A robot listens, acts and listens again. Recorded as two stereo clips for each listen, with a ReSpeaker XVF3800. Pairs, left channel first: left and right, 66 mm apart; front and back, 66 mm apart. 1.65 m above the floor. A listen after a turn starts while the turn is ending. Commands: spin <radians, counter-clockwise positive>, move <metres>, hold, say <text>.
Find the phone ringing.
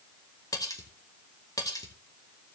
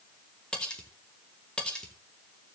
hold
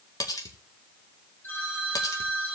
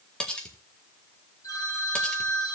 spin 0.52
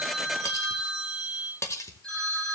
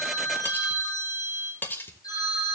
spin 0.17
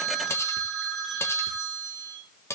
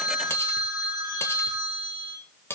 say Found it: a phone ringing, straight ahead.